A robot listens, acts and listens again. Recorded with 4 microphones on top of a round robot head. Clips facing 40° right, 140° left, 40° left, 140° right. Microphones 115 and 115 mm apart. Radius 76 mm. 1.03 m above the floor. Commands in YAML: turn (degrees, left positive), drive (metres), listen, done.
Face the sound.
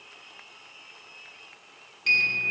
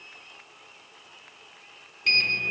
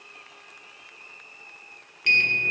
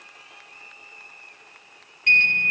turn: 50
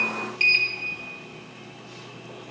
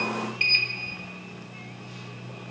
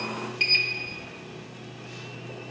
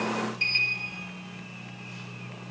turn: 10
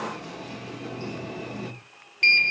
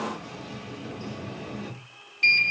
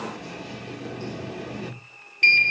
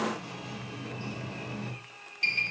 done: "Found it: a sliding door, straight ahead, 1 to 2 m away."